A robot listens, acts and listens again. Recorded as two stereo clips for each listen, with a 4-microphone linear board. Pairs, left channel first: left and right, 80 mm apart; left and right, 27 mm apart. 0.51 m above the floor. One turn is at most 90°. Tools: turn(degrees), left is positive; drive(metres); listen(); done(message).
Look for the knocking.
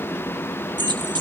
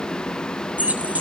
listen()
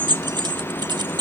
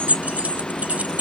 listen()
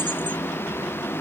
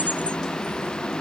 done("I can't make out knocking, only keys jangling.")